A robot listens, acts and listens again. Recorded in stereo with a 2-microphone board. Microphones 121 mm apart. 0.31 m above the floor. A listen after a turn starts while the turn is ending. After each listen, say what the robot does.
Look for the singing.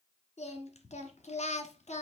Turn 90° left.
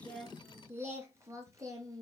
Turn 30° right.
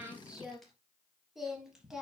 Facing the singing.